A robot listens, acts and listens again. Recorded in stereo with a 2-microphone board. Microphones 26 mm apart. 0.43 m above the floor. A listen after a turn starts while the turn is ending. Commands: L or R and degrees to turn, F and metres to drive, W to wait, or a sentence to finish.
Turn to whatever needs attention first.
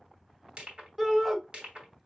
R15
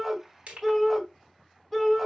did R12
Facing the shout, 1 to 2 m away.